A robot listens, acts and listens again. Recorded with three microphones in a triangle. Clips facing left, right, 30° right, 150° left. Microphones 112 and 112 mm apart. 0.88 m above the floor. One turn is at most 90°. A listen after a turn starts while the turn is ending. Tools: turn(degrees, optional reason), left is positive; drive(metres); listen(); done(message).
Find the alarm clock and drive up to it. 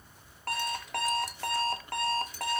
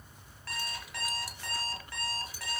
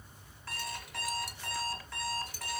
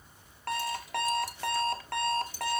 turn(degrees=90, reason="The alarm clock: 125° left.")
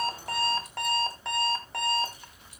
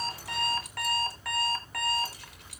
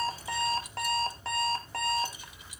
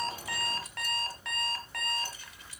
turn(degrees=25, reason="The alarm clock is now 25° left.")
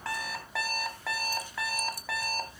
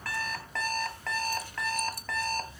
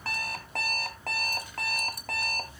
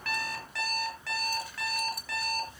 turn(degrees=10, reason="The alarm clock is now 10° left.")
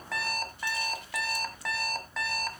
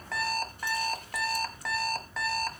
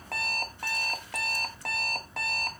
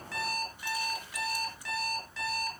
drive(metres=1.0)
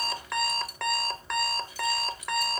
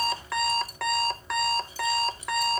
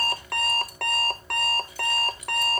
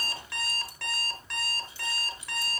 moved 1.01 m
drive(metres=1.0)
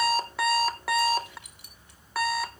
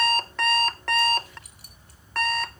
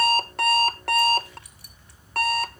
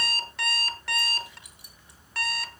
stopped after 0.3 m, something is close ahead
turn(degrees=10, reason="The alarm clock is now 10° left.")
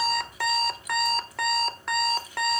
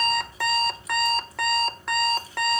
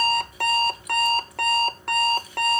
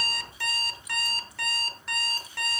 done("I am next to the alarm clock.")